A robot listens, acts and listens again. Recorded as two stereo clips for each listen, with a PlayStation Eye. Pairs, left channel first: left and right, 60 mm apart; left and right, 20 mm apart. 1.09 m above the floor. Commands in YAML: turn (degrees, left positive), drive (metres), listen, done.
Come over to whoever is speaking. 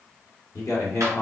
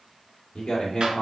turn: 90
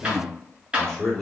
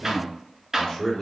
turn: 10
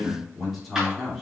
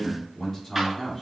drive: 1.0
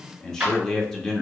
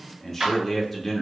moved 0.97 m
turn: 10
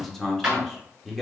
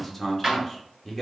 drive: 1.0
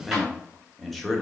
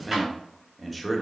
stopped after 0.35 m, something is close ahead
done: "I am next to the man speaking."